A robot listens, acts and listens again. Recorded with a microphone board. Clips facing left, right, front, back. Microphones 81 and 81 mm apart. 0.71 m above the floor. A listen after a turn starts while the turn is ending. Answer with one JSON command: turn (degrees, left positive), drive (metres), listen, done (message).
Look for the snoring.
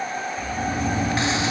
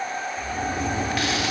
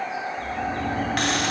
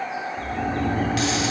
{"turn": -120}
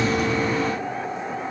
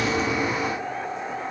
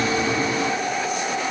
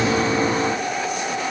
{"listen": true}
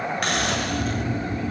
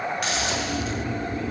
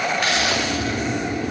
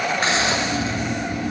{"turn": -30}
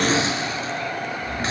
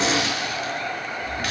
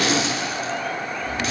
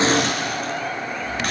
{"done": "Found it: snoring, straight ahead, 2 to 4 m away."}